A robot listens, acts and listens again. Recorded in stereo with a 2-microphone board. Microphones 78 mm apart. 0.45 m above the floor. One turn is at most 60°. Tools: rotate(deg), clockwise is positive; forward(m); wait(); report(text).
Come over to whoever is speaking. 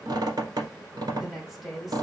rotate(-30)
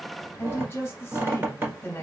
rotate(-60)
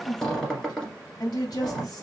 rotate(-60)
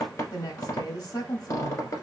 rotate(-60)
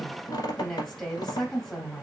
forward(1.0)
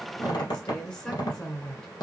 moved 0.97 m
rotate(-10)
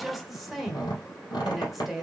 forward(1.0)
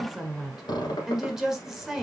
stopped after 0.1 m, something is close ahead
report("Arrived at the woman speaking, straight ahead.")